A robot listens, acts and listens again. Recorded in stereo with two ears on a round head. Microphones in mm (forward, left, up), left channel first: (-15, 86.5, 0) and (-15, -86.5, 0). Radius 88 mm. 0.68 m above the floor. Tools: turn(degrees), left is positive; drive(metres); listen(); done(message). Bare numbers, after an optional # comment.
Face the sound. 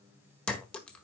turn(30)
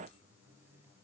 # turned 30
listen()
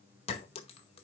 # So it is at 145° left.
turn(145)
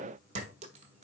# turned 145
# The clink is now 35° right.
turn(-35)
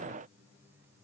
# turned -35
listen()
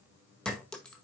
done("Found it: a clink, straight ahead.")